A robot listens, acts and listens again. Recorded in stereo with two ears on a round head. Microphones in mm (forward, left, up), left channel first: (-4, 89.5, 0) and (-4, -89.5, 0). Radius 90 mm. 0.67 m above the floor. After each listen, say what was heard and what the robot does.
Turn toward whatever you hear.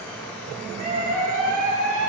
The scream: about 40° right or 140° right. Turn 40° right.
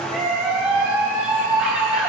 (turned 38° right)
Found it: a scream, straight ahead.